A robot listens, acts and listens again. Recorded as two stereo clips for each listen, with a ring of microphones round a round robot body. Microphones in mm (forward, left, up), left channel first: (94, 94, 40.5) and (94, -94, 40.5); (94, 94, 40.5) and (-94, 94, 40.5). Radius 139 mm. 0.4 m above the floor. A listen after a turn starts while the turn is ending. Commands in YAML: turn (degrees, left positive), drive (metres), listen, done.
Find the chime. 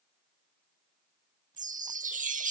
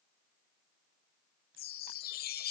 turn: -40
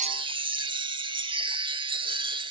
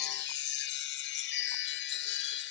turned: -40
turn: -25
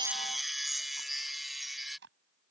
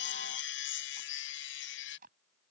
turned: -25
done: "Facing the chime."